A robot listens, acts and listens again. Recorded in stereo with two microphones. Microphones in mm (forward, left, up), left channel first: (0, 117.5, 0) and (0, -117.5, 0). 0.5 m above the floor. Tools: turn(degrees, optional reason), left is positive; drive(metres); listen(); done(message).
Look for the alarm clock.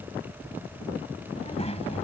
listen()
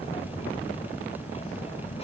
listen()
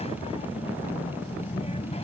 done("I can't make out an alarm clock to turn to.")